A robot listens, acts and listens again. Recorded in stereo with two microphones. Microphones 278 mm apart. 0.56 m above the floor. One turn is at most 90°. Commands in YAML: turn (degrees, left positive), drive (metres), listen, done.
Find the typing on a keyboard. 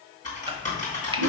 turn: 25
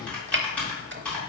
done: "Facing the typing on a keyboard, 2 to 4 m away."